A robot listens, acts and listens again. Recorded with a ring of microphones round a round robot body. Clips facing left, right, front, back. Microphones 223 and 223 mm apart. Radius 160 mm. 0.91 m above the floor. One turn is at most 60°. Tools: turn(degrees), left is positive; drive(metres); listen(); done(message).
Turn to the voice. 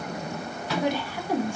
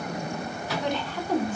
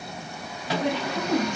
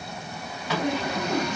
turn(degrees=10)
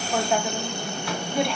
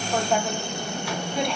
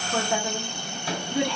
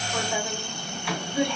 done("Found it: a woman speaking, straight ahead, 1 to 2 m away.")